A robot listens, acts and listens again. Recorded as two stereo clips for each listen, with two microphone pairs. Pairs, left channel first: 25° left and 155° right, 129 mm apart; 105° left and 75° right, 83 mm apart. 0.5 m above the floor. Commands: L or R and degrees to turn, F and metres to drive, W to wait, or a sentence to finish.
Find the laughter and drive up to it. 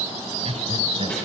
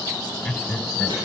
R175
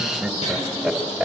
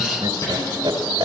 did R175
R70
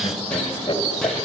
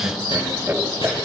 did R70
R10
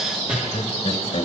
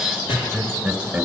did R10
F1.0
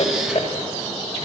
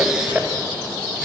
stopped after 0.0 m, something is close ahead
Something is in my way. I am facing the laughter but have not reached it.